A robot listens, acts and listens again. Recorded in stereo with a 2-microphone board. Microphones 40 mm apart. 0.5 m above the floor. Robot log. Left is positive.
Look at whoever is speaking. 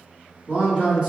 note: The man speaking: about 30° right or 150° right.
cmd yaw -30
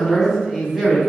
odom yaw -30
note: So it is at 10° right.
cmd yaw -10
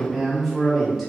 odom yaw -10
end: Found it: a man speaking, straight ahead.